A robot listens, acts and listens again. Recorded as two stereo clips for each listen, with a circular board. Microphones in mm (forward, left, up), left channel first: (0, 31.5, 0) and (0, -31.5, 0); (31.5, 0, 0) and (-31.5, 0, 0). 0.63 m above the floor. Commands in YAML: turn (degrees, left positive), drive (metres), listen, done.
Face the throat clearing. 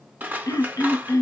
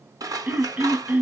turn: 115
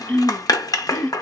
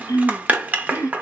turn: 25
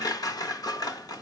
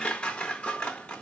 listen: true
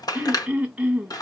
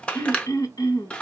turn: -15
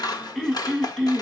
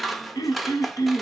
done: "Facing the throat clearing."